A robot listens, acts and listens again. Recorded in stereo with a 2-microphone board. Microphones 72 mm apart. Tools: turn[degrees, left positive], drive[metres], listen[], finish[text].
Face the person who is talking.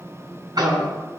Thought: The woman speaking: about 60° right or 120° right.
Action: turn[-60]
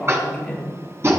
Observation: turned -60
Action: finish[Found it: a woman speaking, straight ahead, over 4 m away.]